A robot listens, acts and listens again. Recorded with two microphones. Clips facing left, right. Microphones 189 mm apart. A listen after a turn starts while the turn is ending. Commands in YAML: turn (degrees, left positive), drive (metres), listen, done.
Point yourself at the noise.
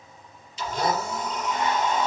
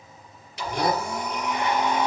turn: -90
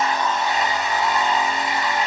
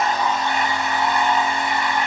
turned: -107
turn: 20
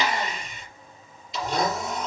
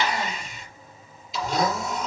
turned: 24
done: "Found it: a blender, straight ahead, over 4 m away."